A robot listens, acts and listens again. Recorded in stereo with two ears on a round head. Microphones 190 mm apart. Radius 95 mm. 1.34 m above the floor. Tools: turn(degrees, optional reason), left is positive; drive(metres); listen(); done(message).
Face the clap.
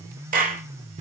turn(degrees=-40, reason="The clap: about 40° right or 140° right.")
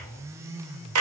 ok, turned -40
turn(degrees=-100, reason="So it is at 100° right.")
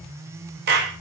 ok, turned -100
turn(degrees=-50, reason="The clap is now 50° right.")
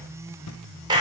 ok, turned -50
turn(degrees=-20, reason="The clap is now 20° right.")
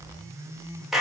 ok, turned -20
done("Facing the clap, 2 to 4 m away.")